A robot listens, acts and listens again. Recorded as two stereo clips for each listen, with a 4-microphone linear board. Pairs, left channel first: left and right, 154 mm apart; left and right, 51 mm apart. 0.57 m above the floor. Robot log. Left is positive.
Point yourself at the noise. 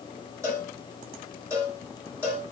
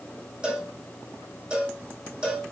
note: The cowbell: about 20° right or 160° right.
cmd yaw -20
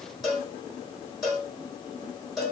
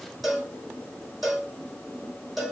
end: Found it: a cowbell, straight ahead, 2 to 4 m away.